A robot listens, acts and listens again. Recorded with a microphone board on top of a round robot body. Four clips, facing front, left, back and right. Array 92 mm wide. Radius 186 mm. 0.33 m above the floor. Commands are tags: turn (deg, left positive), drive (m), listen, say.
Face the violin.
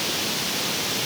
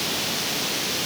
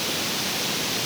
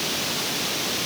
<listen/>
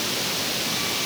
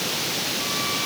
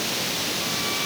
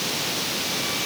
<listen/>
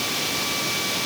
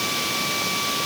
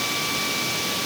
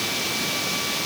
<say>I can't make out a violin to turn to.</say>